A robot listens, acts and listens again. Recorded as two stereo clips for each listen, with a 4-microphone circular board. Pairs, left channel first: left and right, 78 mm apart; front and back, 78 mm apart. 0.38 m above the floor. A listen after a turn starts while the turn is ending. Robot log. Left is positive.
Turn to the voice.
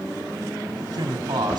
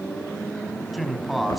note: The man speaking: 90° right.
cmd yaw -90
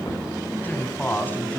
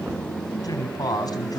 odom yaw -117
note: The man speaking is now 25° left.
cmd yaw +25
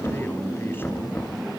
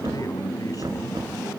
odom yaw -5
note: Nothing new. It was at 30° left.
cmd yaw +30
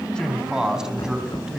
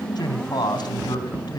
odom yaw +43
note: The man speaking is now 10° right.
cmd yaw -10
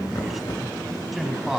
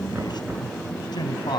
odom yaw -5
end: Found it: a man speaking, straight ahead, 2 to 4 m away.